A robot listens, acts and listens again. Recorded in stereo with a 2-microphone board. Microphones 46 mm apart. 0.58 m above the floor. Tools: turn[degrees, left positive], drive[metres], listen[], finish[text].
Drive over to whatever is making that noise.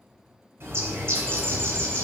Thought: The bird: about 65° right or 115° right.
Action: turn[-65]
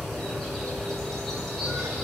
Action: drive[1.0]
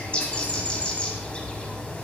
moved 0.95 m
Thought: The bird is now 25° left.
Action: turn[25]
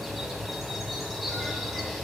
Action: drive[1.0]
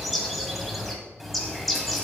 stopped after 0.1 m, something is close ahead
Action: finish[I am next to the bird.]